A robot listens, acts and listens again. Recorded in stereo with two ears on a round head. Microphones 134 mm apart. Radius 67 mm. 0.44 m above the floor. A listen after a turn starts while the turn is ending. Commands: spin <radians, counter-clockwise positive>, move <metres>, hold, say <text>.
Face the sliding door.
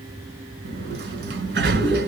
spin -1.57
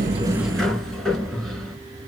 say Found it: a sliding door, straight ahead.